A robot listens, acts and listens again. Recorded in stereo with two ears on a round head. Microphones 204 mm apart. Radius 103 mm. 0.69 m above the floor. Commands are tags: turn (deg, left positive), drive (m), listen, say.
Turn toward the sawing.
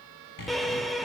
<turn deg="50"/>
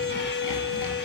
<listen/>
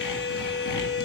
<listen/>
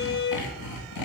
<turn deg="85"/>
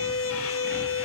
<listen/>
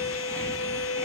<listen/>
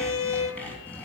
<say>Found it: sawing, straight ahead, 2 to 4 m away.</say>